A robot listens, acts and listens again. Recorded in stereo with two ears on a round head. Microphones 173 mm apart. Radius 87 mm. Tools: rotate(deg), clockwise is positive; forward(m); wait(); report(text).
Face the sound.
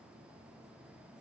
wait()
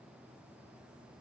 wait()
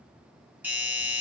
rotate(30)
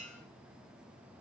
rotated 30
rotate(140)
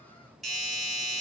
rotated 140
report("Facing the doorbell, 1 to 2 m away.")